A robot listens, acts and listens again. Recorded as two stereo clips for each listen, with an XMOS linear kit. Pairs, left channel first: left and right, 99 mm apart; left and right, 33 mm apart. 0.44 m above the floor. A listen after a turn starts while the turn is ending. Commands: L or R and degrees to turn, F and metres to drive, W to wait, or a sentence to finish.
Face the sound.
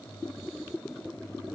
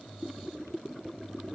W
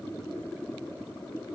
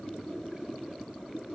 W
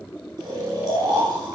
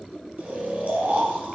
R40
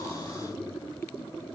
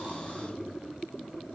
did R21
W
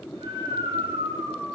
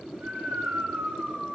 R120
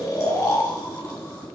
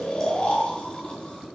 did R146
L30
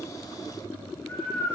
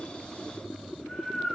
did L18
L10
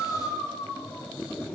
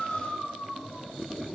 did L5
Facing the snoring.